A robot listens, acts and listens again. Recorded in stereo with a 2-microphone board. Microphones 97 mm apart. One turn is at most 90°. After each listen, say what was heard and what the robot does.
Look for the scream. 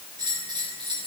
Keep listening.
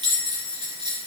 Keep listening.
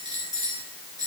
I can't make out a scream to turn to.